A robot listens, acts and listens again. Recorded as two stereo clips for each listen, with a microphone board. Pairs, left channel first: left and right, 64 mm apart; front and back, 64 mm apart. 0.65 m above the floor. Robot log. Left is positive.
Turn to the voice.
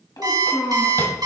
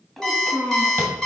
note: The child speaking: 85° left.
cmd yaw +85
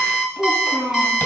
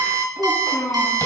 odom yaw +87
note: The child speaking is now 10° right.
cmd yaw -10
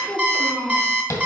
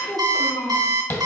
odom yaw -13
end: Found it: a child speaking, straight ahead.